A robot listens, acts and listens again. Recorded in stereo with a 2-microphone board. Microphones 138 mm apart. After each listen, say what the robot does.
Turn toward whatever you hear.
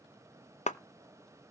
Turn 55° left.
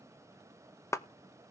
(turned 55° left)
Turn 25° left.
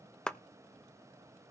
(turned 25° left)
Facing the clap.